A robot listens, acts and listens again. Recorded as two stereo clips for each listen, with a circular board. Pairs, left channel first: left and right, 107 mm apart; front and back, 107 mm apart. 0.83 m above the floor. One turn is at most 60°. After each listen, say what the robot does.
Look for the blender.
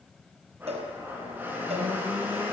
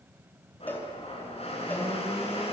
Turn 15° right.
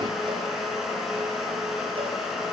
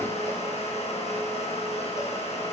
Found it: a blender, straight ahead.